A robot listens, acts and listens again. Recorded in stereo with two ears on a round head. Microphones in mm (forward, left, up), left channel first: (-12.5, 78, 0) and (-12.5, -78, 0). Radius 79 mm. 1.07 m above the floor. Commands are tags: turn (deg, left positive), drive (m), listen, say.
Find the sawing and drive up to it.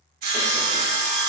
<turn deg="-55"/>
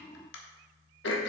<listen/>
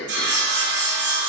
<turn deg="-70"/>
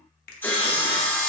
<turn deg="10"/>
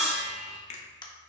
<drive m="1.0"/>
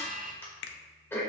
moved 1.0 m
<listen/>
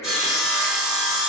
<drive m="1.0"/>
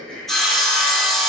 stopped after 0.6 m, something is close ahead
<say>Arrived at the sawing, straight ahead.</say>